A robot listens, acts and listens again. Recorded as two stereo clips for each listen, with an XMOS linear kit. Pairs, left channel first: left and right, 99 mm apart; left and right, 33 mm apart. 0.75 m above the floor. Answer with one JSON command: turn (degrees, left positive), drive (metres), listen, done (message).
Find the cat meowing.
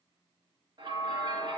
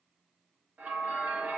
{"listen": true}
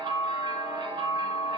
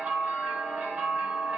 {"listen": true}
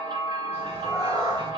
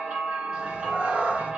{"turn": -45}
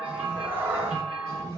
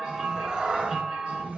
{"turn": -35}
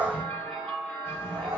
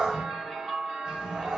{"turn": -20}
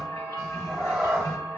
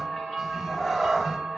{"done": "Found it: a cat meowing, straight ahead, 2 to 4 m away."}